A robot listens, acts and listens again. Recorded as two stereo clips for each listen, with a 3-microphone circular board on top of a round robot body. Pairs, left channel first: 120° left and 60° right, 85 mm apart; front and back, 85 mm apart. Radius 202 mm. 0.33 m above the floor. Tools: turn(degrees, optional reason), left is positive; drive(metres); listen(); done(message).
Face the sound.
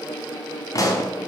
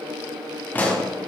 turn(degrees=70, reason="The pop: 70° left.")
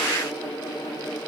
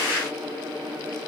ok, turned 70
done("I heard a pop from this way, but can't make it out now.")